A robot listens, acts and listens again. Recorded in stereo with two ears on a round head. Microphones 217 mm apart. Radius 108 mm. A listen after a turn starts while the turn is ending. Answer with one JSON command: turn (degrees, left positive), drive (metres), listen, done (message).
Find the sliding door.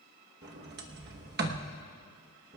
{"turn": -45}
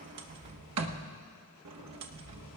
{"turn": -85}
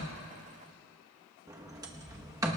{"turn": -15}
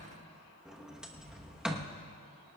{"done": "Facing the sliding door, 1 to 2 m away."}